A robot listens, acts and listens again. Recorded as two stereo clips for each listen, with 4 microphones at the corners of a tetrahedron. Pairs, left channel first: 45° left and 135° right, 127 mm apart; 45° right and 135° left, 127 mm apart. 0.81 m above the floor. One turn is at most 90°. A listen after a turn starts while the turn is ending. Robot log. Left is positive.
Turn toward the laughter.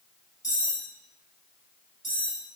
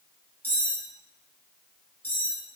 cmd idle
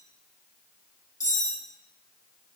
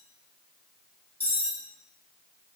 cmd idle
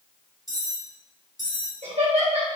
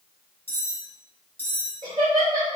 note: The laughter: 170° right.
cmd yaw -90
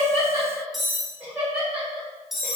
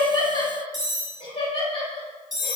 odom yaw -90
note: The laughter is now 60° right.
cmd yaw -60
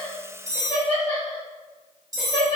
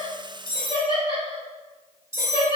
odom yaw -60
note: The laughter is now 10° left.
cmd yaw +10
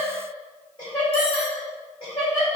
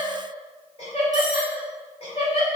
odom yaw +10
end: Found it: laughter, straight ahead.